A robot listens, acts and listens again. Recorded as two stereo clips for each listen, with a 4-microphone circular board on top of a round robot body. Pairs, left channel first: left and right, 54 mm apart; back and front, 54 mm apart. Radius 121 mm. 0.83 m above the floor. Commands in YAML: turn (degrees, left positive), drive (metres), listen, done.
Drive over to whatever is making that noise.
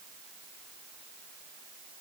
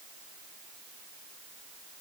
listen: true
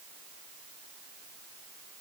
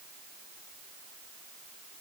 listen: true
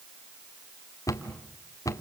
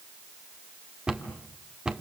turn: 75
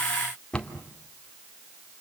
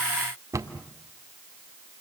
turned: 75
turn: 20
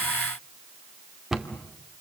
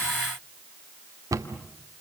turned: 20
turn: -10
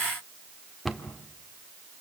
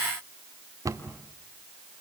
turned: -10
drive: 1.0
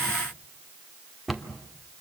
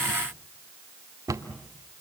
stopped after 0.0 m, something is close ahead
done: "Blocked. The cupboard door is further on, straight ahead."